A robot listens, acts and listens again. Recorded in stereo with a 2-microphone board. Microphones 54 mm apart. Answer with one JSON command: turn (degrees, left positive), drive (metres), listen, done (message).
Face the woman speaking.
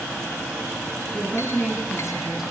{"turn": -30}
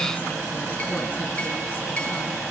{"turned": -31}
{"listen": true}
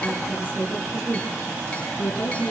{"turn": 40}
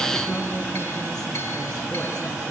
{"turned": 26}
{"turn": 10}
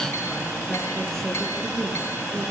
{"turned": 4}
{"turn": 10}
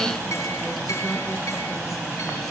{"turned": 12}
{"listen": true}
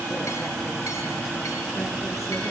{"listen": true}
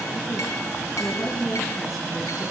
{"done": "Facing the woman speaking."}